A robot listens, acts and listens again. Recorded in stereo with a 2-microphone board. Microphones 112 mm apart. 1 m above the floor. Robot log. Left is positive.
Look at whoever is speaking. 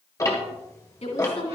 note: The woman speaking: about 70° left or 110° left.
cmd yaw +70
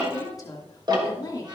note: So it is at 35° left.
cmd yaw +35
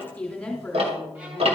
note: The woman speaking is now 10° left.
cmd yaw +10
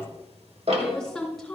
end: Facing the woman speaking, 2 to 4 m away.